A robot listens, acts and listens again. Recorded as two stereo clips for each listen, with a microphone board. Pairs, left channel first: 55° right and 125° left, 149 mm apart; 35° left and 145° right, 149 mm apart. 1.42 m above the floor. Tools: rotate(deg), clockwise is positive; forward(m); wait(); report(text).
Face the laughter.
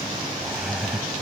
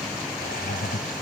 rotate(-35)
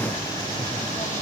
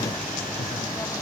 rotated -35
wait()
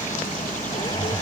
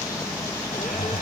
report("Facing the laughter.")